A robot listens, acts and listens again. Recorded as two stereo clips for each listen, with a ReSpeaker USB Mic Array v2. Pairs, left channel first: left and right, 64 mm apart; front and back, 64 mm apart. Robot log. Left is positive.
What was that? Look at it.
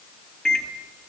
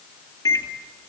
note: The microwave: 10° left.
cmd yaw +10
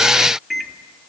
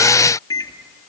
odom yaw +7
end: Found it: a microwave, straight ahead.